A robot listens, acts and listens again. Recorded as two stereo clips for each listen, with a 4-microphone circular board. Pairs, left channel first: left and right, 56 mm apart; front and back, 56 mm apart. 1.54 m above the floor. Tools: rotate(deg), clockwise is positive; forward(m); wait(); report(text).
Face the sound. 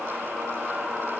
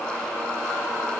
wait()
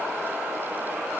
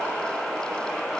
wait()
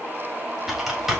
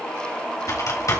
report("Found it: typing on a keyboard, straight ahead.")